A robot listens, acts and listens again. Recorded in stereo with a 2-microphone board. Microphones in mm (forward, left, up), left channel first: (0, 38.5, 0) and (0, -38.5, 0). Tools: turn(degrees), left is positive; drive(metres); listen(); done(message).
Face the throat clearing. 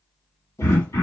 turn(degrees=55)
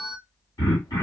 turn(degrees=65)
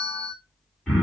turn(degrees=10)
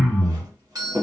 done("Found it: throat clearing, straight ahead, 1 to 2 m away.")